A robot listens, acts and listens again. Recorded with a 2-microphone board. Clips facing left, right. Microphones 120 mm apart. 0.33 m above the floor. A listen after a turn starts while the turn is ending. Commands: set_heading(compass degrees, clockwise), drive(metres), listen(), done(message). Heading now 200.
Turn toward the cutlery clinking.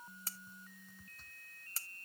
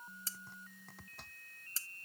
set_heading(135)
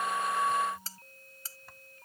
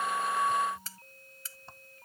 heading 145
set_heading(105)
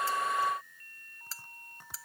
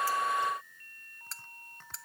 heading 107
done("Facing the cutlery clinking.")